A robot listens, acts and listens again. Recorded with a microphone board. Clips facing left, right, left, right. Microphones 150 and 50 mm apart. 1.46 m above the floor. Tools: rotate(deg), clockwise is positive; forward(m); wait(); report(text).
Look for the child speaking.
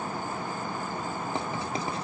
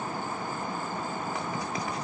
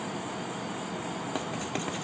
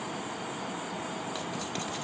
wait()
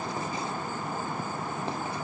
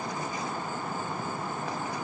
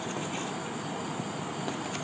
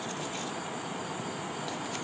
wait()
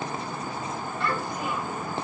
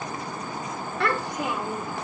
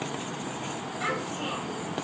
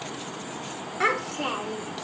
rotate(75)
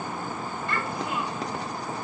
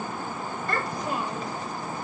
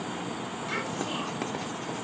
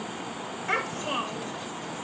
rotate(40)
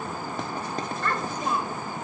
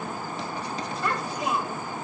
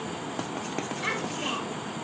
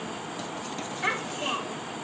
rotate(10)
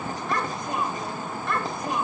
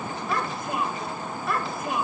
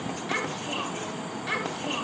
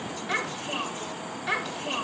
report("Facing the child speaking, over 4 m away.")